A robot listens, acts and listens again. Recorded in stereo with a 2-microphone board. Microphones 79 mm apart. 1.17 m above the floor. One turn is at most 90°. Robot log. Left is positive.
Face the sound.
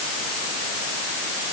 cmd idle
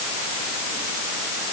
cmd idle
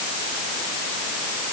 end: I can't make out anything to turn to.